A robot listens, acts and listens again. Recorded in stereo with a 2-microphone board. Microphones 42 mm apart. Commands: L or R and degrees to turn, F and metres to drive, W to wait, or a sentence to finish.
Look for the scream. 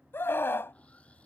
L65
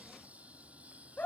L40
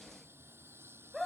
Found it: a scream, straight ahead.